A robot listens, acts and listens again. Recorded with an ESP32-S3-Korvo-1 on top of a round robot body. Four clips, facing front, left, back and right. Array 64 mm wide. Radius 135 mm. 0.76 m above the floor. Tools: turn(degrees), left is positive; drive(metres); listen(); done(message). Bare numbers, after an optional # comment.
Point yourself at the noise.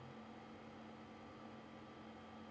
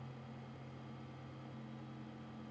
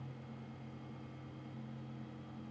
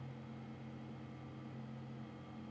listen()
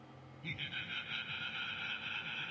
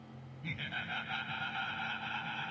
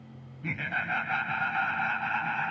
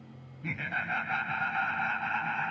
# The laughter: 150° right.
turn(-150)
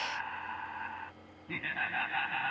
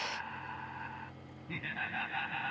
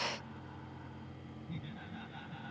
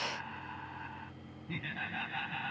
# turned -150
done("Found it: laughter, straight ahead.")